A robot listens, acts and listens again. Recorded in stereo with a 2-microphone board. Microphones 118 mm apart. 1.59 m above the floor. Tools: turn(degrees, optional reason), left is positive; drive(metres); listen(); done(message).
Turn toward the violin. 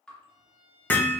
turn(degrees=-70, reason="The violin: about 70° right or 110° right.")
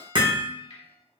turn(degrees=-40, reason="So it is at 40° right.")
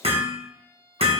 turn(degrees=-25, reason="The violin is now 25° right.")
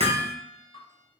listen()
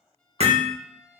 done("Facing the violin, 1 to 2 m away.")